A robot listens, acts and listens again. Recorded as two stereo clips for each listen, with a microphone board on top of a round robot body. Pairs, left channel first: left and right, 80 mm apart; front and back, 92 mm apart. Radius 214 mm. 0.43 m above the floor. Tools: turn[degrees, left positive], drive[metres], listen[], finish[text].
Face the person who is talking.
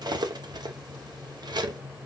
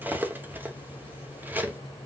Action: listen[]
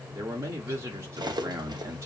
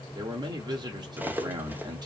Thought: The man speaking: 140° right.
Action: turn[-140]
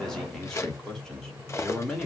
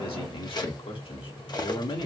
Action: finish[Found it: a man speaking, straight ahead.]